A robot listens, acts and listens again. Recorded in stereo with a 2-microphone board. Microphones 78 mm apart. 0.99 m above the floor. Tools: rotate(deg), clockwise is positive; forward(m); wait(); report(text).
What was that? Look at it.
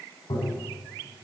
rotate(-75)
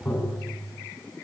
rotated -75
rotate(-30)
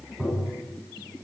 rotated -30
report("Facing the tapping, 2 to 4 m away.")